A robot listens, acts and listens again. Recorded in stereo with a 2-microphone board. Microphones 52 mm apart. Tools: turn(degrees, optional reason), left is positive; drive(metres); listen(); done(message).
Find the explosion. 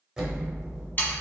turn(degrees=-30)
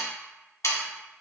listen()
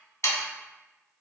done("I heard an explosion, but can't make it out now. It was about 15° left or 135° right.")